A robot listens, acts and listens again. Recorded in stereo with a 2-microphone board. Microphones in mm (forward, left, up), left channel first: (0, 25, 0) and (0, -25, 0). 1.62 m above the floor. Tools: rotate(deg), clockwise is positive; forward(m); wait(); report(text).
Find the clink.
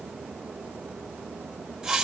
wait()
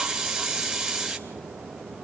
wait()
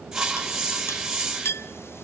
rotate(-55)
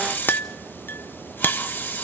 rotate(-50)
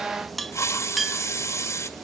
report("Facing the clink.")